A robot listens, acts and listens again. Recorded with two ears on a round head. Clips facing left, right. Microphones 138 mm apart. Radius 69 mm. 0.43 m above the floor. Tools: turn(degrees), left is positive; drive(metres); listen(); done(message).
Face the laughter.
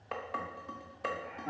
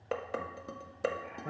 turn(degrees=-60)
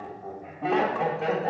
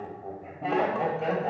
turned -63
done("Facing the laughter, 2 to 4 m away.")